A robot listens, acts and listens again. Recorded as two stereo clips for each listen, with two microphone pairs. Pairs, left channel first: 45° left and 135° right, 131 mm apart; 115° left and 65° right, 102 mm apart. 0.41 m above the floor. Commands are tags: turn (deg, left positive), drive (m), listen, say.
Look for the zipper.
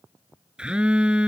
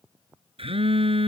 <listen/>
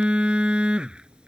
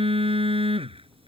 <listen/>
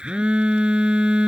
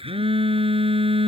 <say>I can't make out a zipper to turn to.</say>